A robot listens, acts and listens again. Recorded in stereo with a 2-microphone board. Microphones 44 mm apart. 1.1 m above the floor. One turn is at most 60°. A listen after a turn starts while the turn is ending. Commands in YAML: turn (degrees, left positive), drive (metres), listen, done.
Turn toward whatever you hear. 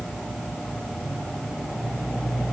listen: true
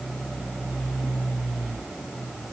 listen: true
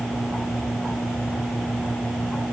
done: "I can't make out anything to turn to."